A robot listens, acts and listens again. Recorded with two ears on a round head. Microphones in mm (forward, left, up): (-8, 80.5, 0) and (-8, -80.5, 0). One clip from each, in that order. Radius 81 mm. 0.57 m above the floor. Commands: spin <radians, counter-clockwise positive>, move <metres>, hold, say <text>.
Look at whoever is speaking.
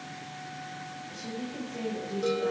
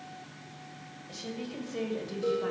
spin -1.05
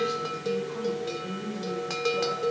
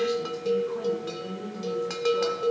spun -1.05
spin -0.26
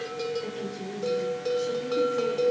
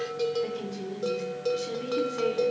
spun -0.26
spin -0.26
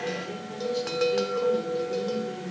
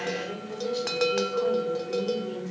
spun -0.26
spin -0.17
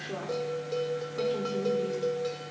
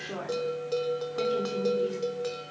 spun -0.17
say Facing the woman speaking.